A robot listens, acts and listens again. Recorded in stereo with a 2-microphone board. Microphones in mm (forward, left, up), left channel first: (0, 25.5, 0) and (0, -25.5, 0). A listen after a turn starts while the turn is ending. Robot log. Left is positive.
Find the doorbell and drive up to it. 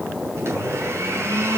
cmd idle
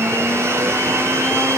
cmd idle
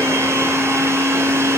end: I can't make out a doorbell to turn to.